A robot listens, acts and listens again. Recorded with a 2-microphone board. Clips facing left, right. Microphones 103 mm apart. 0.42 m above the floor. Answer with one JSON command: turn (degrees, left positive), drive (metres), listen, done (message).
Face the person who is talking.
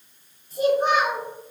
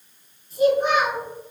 {"turn": 40}
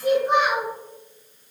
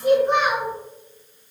{"done": "Facing the child speaking."}